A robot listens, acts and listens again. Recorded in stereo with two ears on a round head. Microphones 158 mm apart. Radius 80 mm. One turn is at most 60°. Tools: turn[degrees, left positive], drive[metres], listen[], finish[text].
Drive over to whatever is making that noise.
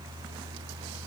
Action: listen[]
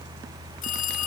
Thought: The phone ringing: about 45° left or 135° left.
Action: turn[45]
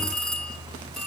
Action: drive[1.0]
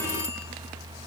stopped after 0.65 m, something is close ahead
Action: finish[Something is in my way. I am facing the phone ringing but have not reached it.]